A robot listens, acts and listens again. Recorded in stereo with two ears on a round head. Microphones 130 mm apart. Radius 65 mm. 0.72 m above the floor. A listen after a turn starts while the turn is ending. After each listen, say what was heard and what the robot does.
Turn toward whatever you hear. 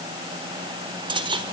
The cutlery clinking: about 35° right or 145° right. Turn 35° right.
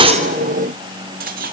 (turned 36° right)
So it is at 110° right. Turn 110° right.
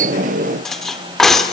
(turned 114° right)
Found it: cutlery clinking, straight ahead, 1 to 2 m away.